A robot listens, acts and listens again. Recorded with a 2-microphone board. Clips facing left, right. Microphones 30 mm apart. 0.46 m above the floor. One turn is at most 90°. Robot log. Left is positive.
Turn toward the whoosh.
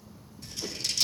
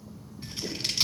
note: The whoosh: about 30° left or 150° left.
cmd yaw +30
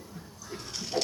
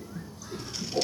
note: So it is at 120° left.
cmd yaw +90
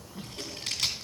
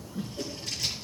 note: The whoosh is now 35° left.
cmd yaw +35
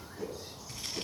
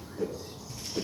end: Found it: a whoosh, straight ahead, 2 to 4 m away.